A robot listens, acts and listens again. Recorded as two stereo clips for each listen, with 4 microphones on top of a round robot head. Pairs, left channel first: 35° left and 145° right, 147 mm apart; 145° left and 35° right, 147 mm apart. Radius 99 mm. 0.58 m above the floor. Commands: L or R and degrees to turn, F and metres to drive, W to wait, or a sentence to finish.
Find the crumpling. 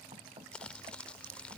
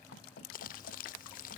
L115
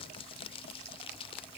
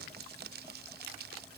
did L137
R20
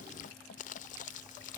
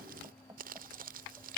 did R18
Facing the crumpling.